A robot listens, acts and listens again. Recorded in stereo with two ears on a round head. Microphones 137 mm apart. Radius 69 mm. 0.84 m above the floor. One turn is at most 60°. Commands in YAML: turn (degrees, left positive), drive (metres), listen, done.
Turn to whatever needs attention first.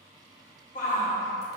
turn: 60
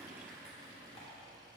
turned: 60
listen: true
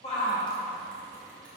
turn: 45
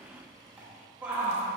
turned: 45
turn: -10
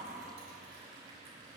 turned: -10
listen: true
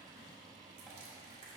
listen: true
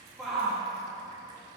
done: "Found it: a shout, straight ahead."